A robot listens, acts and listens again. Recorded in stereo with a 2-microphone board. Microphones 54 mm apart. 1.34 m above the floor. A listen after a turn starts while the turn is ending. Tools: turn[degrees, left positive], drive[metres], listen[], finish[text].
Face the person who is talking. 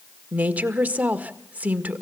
Thought: The woman speaking: about 25° right or 155° right.
Action: turn[-25]
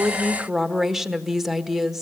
Action: finish[Found it: a woman speaking, straight ahead.]